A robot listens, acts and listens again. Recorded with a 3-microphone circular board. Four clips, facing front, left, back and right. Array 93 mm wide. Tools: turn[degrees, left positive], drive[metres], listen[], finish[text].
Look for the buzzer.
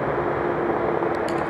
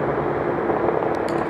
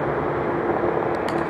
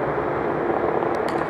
Action: listen[]
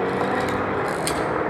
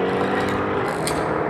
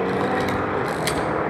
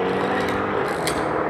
Action: listen[]
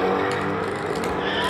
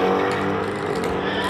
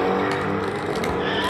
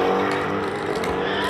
Action: finish[I can't make out a buzzer.]